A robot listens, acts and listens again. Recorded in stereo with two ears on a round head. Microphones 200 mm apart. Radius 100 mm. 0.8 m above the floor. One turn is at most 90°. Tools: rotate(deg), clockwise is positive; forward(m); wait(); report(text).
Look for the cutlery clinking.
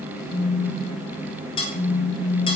rotate(-25)
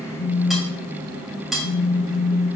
report("Found it: cutlery clinking, straight ahead, 2 to 4 m away.")